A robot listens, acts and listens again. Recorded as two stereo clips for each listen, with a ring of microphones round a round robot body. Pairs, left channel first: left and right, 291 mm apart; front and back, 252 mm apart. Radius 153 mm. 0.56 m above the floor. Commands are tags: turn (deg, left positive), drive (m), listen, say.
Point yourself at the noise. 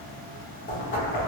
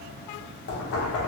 <turn deg="30"/>
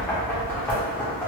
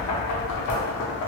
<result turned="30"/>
<say>Found it: knocking, straight ahead.</say>